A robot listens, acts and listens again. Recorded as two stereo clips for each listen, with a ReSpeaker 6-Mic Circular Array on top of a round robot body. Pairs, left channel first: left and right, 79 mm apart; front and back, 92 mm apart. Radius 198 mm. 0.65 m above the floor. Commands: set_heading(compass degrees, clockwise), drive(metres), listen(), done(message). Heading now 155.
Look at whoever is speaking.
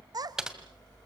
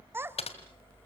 set_heading(270)
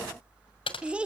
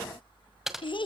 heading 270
set_heading(285)
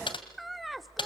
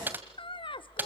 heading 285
done("Facing the child speaking.")